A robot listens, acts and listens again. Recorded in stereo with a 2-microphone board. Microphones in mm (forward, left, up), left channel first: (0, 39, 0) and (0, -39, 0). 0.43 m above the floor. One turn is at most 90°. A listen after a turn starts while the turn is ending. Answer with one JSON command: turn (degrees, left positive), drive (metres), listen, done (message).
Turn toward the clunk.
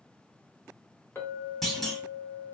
{"turn": 30}
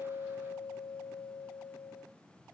{"listen": true}
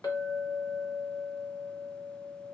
{"done": "I heard a clunk, but can't make it out now. It was about 25° right or 145° left."}